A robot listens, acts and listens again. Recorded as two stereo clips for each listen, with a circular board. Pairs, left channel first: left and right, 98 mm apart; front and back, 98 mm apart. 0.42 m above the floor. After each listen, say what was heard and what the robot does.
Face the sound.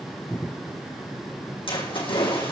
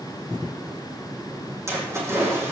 The splash: 115° left. Turn 115° left.
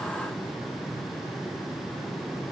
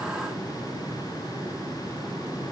I heard a splash from this way, but can't make it out now.